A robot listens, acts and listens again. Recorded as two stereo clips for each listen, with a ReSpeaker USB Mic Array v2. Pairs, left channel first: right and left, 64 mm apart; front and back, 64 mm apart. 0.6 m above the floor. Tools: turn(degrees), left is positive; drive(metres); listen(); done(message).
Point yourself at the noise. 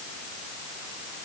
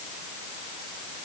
listen()
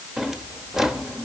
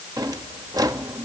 turn(degrees=175)
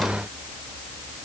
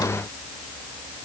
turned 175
listen()
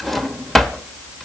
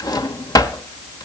done("Found it: a drawer, straight ahead.")